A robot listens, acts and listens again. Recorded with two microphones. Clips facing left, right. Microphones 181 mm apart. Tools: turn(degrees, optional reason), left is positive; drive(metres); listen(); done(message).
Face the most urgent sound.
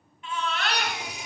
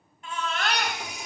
turn(degrees=-45, reason="The baby crying: about 45° right or 135° right.")
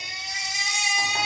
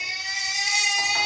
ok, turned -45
done("Found it: a baby crying, straight ahead, 1 to 2 m away.")